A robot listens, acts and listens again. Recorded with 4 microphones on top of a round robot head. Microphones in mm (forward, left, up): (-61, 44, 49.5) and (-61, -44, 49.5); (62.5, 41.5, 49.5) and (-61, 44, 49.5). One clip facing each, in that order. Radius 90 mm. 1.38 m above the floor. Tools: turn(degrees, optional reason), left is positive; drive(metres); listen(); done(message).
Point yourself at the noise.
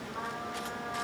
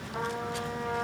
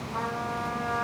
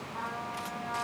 turn(degrees=-40, reason="The trumpet: 40° right.")
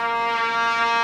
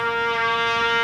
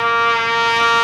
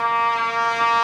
done("Found it: a trumpet, straight ahead, over 4 m away.")